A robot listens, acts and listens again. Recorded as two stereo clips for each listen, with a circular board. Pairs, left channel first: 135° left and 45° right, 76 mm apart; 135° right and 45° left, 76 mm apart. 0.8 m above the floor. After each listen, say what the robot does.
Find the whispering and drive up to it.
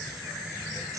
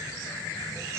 Keep listening.
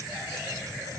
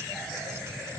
Keep listening.
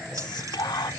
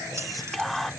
Turn 135° left.
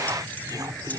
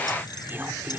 Turn 15° right.
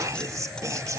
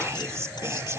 Drive 1.0 m forward.
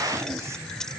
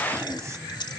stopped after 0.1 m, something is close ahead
Keep listening.
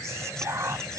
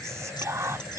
Something is in my way. I am facing the whispering but have not reached it.